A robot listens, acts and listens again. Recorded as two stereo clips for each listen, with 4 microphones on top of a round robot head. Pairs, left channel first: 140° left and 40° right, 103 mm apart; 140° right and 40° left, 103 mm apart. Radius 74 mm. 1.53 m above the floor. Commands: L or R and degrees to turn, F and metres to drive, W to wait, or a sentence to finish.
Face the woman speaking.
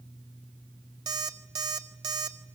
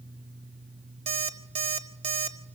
W
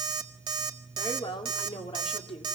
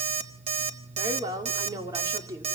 L100
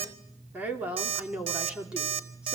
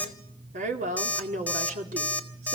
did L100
L40
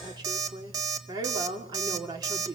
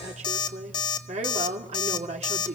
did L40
L15
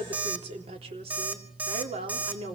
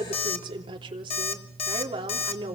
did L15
Found it: a woman speaking, straight ahead, 2 to 4 m away.